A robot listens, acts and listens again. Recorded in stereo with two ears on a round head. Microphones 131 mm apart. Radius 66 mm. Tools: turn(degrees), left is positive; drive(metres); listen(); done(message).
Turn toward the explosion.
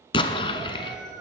turn(degrees=35)
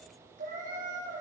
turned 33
listen()
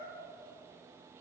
done("I heard an explosion, but can't make it out now. It was about straight ahead or 115° left.")